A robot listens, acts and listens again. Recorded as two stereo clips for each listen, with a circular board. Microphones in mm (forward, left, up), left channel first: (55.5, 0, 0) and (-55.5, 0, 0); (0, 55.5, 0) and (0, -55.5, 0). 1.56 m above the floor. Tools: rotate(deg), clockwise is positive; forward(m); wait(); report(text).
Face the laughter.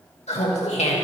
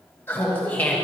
rotate(-10)
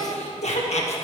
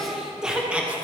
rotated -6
rotate(15)
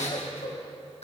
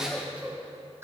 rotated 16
rotate(25)
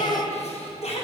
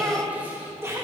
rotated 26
rotate(25)
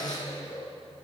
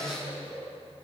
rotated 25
rotate(15)
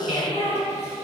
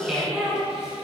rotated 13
rotate(10)
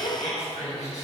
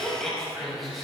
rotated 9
report("Found it: laughter, straight ahead, 2 to 4 m away.")